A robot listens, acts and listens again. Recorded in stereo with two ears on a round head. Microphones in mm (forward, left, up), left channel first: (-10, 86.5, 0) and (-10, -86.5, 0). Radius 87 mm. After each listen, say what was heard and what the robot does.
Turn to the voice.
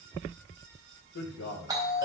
The man speaking: about 75° left or 105° left. Turn 75° left.
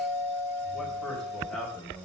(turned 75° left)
Facing the man speaking, 2 to 4 m away.